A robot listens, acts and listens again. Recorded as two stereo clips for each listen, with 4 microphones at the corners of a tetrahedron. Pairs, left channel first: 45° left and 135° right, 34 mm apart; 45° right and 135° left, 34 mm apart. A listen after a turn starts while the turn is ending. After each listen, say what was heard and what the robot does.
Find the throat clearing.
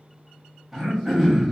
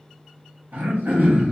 The throat clearing: 135° left. Turn 135° left.
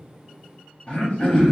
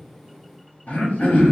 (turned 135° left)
The throat clearing is now 10° right. Turn 10° right.
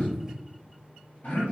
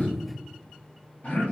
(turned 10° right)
Found it: throat clearing, straight ahead, 1 to 2 m away.